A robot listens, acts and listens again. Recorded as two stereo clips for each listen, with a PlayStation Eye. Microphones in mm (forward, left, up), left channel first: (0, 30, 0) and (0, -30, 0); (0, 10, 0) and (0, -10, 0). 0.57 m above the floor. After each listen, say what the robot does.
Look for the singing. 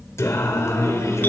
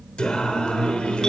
Turn 65° left.
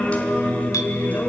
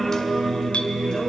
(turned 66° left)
Turn 30° left.
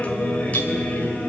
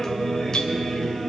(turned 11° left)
Turn 30° left.
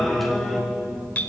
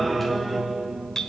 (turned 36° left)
Found it: singing, straight ahead, 2 to 4 m away.